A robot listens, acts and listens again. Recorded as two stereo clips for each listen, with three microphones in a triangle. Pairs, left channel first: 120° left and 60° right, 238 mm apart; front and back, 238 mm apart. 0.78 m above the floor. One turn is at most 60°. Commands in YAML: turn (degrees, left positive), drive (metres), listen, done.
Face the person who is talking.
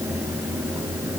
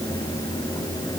listen: true
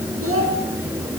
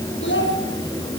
turn: -40
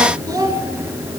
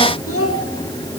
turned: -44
turn: 15
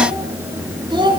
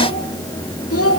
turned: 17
turn: 10
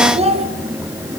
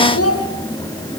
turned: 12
done: "Facing the child speaking, over 4 m away."